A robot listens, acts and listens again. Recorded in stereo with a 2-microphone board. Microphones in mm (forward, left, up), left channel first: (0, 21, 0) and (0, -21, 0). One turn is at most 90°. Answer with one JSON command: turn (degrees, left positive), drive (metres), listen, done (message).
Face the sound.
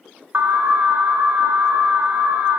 {"turn": -50}
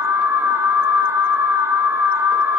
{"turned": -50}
{"turn": -80}
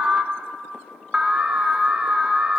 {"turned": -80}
{"turn": -20}
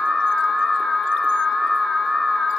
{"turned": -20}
{"done": "Found it: an alarm, straight ahead."}